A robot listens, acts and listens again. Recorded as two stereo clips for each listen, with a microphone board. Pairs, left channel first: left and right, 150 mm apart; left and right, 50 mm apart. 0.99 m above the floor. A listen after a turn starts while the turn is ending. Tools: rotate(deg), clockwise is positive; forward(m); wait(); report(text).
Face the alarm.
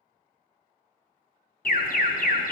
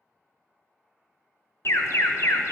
rotate(-65)
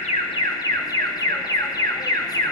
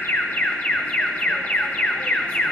rotate(-25)
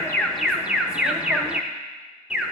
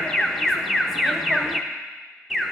report("Facing the alarm.")